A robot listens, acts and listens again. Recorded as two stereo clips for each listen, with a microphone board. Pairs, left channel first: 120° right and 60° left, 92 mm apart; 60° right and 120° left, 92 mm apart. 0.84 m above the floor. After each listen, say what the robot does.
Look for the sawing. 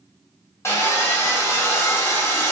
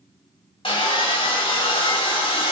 Turn 60° right.
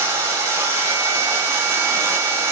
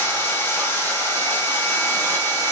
Found it: sawing, straight ahead, 1 to 2 m away.